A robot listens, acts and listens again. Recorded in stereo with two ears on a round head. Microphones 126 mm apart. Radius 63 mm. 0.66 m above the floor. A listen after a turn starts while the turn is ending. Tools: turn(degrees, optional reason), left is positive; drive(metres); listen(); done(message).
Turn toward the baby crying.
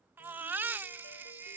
turn(degrees=-30)
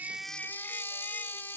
turn(degrees=15, reason="So it is at 15° left.")
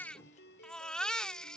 done("Found it: a baby crying, straight ahead.")